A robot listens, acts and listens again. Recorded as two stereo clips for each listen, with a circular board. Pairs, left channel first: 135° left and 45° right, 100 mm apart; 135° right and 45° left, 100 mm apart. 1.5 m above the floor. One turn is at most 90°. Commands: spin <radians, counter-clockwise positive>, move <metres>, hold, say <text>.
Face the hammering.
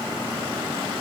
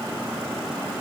hold
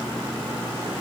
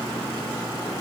hold
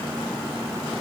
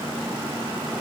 say I can't make out hammering to turn to.